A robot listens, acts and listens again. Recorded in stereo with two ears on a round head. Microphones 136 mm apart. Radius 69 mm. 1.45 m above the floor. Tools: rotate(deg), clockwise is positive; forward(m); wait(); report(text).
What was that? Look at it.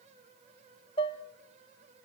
rotate(-35)
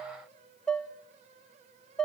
report("Found it: dishes clattering, straight ahead.")